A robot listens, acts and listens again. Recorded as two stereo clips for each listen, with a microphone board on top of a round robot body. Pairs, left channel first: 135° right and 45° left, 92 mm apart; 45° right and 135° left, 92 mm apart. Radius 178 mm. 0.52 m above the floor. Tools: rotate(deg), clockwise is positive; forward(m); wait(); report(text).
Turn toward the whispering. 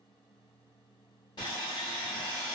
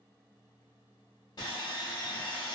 wait()
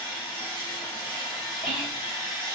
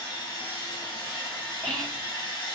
rotate(125)
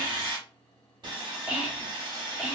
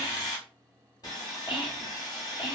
rotate(30)
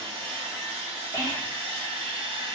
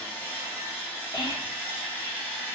report("Found it: whispering, straight ahead.")